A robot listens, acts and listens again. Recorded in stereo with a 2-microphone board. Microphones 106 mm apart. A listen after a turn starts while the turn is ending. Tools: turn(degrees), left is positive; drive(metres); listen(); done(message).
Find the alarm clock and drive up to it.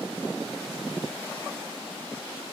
listen()
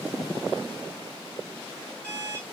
turn(degrees=-20)
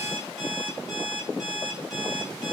drive(metres=1.0)
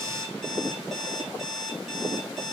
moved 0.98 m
drive(metres=1.0)
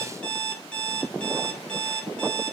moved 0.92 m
turn(degrees=10)
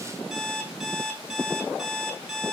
drive(metres=1.0)
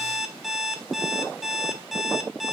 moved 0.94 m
drive(metres=1.0)
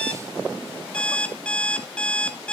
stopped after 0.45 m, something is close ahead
turn(degrees=10)
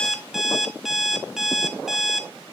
done("Arrived at the alarm clock, straight ahead.")